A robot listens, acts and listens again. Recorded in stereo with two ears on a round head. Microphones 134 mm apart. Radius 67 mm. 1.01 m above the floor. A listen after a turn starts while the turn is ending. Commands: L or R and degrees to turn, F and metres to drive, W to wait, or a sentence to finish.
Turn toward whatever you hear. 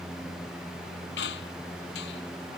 L90
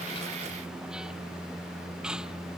Found it: a squeak, straight ahead.